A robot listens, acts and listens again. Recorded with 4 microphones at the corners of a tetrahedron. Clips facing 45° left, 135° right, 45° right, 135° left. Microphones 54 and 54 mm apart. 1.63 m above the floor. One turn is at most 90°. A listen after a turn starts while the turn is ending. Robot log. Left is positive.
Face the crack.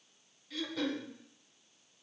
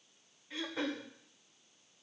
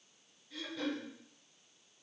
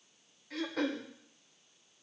cmd idle
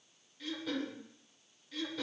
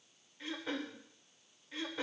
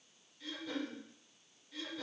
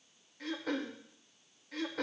cmd idle
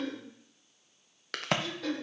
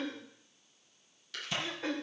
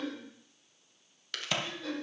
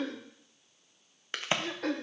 note: The crack: 70° left.
cmd yaw +70
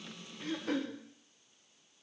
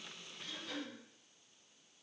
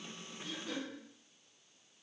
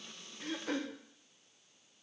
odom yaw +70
end: I heard a crack from this way, but can't make it out now.